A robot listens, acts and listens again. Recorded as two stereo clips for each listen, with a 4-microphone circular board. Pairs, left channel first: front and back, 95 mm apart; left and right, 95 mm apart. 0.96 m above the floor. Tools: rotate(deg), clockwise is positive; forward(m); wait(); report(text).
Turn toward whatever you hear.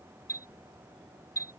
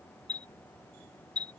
rotate(50)
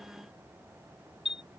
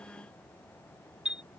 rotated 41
rotate(10)
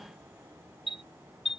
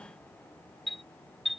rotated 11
report("Facing the chime.")